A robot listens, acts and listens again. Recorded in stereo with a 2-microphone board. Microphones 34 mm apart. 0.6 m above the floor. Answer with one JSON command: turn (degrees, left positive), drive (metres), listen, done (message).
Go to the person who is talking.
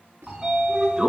{"listen": true}
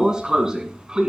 {"listen": true}
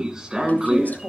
{"turn": 55}
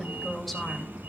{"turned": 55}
{"drive": 1.0}
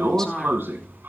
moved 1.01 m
{"turn": 20}
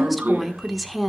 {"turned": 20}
{"drive": 1.0}
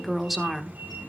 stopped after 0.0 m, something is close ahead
{"done": "I am next to the woman speaking."}